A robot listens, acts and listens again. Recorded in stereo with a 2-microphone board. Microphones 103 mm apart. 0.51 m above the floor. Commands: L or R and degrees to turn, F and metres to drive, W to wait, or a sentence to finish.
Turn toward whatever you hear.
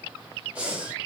R30
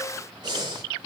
R135
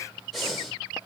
Facing the breathing.